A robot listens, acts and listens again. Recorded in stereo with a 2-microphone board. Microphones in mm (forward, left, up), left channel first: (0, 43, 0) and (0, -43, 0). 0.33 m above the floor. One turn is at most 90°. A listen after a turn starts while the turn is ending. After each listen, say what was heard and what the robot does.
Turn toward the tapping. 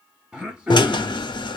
Keep listening.
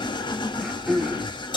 Keep listening.
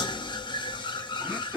I can't make out tapping, only a drill and throat clearing.